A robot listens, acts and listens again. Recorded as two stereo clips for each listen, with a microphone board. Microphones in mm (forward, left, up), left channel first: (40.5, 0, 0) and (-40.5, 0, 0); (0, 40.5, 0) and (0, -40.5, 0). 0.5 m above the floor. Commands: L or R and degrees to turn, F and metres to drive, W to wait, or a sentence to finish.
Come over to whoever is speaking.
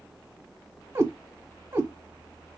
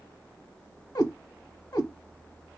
W
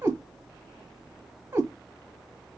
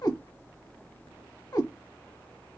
W
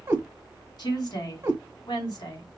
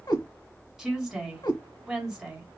R10
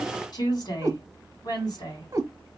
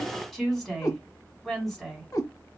F1.0
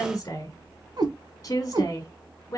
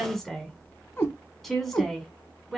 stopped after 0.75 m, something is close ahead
Arrived at the woman speaking, straight ahead.